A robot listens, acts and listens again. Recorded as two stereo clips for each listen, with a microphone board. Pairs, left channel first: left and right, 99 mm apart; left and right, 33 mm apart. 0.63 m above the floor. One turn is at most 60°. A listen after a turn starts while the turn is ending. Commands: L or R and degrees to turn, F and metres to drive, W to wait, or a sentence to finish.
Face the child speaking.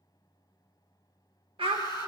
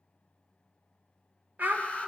R60
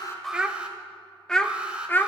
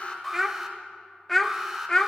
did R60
L20
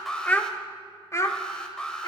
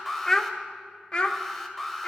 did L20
L40
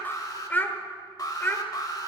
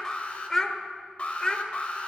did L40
L20
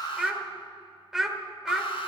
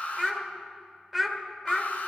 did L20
Found it: a child speaking, straight ahead.